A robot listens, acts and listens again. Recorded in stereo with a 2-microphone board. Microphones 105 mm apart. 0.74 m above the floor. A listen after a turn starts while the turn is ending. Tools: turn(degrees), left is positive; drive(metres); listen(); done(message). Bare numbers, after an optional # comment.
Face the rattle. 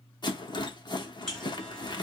# The rattle: about 45° left or 135° left.
turn(45)
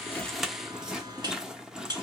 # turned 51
done("Facing the rattle.")